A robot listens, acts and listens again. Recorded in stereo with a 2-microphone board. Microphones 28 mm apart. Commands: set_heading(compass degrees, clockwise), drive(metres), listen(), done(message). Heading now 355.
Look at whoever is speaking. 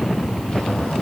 listen()
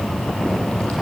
listen()
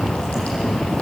done("I can't make out anyone speaking to turn to.")